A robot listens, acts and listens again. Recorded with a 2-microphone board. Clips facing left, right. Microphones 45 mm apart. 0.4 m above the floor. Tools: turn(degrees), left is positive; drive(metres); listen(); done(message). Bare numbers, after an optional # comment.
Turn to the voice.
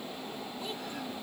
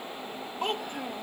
# The child speaking: about 55° right or 125° right.
turn(-55)
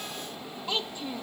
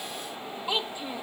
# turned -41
# So it is at 15° right.
turn(-15)
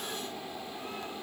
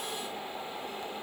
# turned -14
listen()
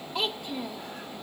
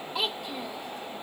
done("Found it: a child speaking, straight ahead.")